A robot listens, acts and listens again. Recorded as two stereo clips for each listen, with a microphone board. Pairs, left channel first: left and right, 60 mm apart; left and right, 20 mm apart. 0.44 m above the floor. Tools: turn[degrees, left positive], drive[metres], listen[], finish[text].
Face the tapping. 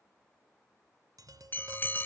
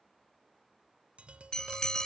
Action: turn[-90]
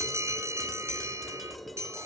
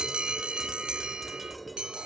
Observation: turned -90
Action: listen[]
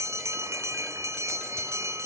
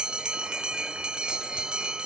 Action: listen[]
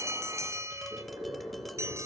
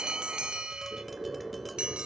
Action: finish[Facing where the tapping came from. I can't hear it now.]